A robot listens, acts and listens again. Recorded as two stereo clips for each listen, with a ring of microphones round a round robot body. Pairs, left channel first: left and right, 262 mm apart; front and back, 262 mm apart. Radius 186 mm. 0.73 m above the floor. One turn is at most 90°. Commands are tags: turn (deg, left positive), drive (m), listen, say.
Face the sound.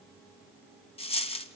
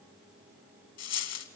<turn deg="20"/>
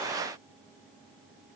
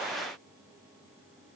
<say>I heard a dropped coin from this way, but can't make it out now.</say>